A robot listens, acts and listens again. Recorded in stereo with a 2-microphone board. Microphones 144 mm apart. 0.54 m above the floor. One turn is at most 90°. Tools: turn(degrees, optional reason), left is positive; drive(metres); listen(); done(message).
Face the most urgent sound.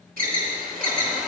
turn(degrees=-90)
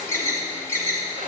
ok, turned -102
turn(degrees=20, reason="So it is at 20° left.")
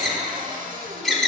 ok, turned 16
done("Found it: an alarm, straight ahead, 1 to 2 m away.")